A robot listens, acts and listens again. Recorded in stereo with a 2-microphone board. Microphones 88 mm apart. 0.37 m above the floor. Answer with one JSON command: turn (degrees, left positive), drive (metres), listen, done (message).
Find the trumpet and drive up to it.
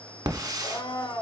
{"listen": true}
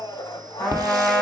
{"turn": 30}
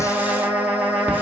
{"turn": -20}
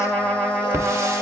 {"drive": 1.0}
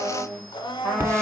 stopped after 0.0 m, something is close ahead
{"done": "Blocked. The trumpet is further on, straight ahead."}